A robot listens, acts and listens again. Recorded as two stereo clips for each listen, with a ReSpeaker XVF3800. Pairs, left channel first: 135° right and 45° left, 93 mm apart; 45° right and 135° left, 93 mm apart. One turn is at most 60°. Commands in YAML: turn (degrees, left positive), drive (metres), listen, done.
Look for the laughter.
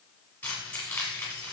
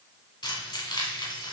listen: true
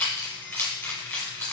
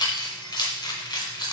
listen: true
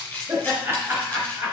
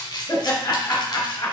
turn: -25
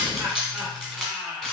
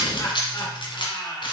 turn: -25
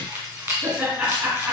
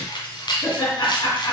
turn: -10
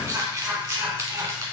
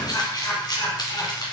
done: "Facing the laughter, 1 to 2 m away."